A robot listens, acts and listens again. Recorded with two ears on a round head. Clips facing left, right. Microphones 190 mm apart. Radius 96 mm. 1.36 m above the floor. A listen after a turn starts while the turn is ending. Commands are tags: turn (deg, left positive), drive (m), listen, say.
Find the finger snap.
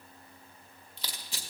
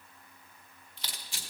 <listen/>
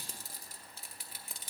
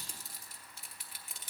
<listen/>
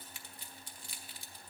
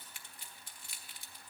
<say>I can't make out a finger snap to turn to.</say>